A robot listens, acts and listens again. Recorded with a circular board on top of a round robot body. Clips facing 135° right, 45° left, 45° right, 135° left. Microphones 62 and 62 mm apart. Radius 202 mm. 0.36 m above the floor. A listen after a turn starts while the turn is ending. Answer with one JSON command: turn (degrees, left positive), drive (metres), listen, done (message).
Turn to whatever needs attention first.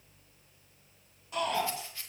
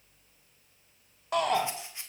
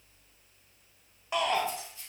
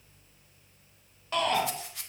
{"turn": 30}
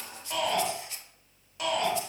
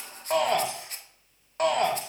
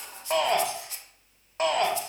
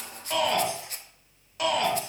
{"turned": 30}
{"done": "Found it: a shout, straight ahead, 2 to 4 m away."}